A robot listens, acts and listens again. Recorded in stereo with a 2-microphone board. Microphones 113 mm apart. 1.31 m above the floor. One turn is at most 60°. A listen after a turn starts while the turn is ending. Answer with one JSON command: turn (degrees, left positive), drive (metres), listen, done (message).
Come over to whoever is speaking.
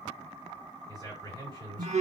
{"turn": -35}
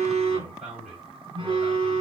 {"turn": -60}
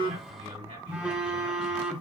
{"turn": -60}
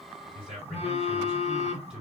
{"drive": 1.0}
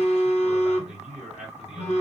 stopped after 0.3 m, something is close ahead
{"done": "Something is in my way. I am facing the man speaking but have not reached it."}